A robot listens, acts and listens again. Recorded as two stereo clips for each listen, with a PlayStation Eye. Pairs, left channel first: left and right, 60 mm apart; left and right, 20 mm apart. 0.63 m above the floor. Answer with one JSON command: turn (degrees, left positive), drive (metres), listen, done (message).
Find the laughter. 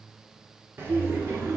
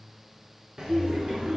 {"turn": -50}
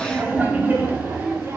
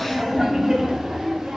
{"turn": -45}
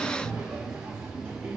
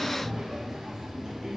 {"turn": -25}
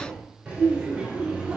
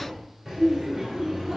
{"turn": -15}
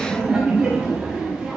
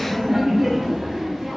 {"done": "Found it: laughter, straight ahead, 2 to 4 m away."}